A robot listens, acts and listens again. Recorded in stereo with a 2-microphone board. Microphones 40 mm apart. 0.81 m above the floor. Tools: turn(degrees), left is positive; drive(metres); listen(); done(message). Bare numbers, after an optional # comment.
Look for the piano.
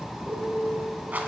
turn(-90)
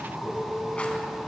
listen()
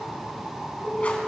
done("Found it: a piano, straight ahead, 1 to 2 m away.")